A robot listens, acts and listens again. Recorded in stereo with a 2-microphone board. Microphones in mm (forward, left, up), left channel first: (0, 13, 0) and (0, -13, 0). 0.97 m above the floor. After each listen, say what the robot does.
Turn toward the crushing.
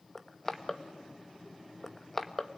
Turn 30° left.
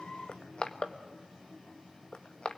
Turn 135° left.
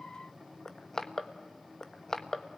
Turn 25° left.
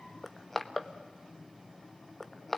Turn 10° left.
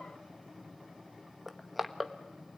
Facing the crushing, 1 to 2 m away.